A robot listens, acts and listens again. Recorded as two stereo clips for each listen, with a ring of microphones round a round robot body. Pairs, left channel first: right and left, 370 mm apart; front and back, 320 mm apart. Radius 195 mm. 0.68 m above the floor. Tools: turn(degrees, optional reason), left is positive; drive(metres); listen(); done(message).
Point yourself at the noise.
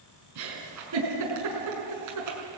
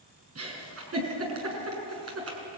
turn(degrees=135, reason="The giggle: 135° left.")
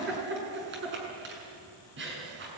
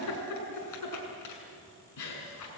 turn(degrees=30, reason="The giggle is now 30° left.")
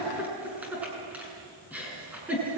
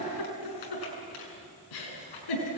done("Facing the giggle, over 4 m away.")